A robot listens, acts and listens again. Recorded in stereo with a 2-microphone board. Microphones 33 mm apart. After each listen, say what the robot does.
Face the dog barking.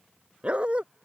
Turn 35° right.
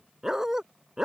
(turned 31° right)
Turn 20° right.
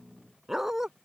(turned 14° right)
Turn 15° right.
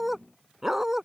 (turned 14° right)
Turn 15° right.
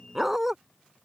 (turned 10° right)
Turn 10° right.
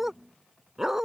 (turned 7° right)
Turn 15° right.
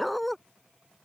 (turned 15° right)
Facing the dog barking.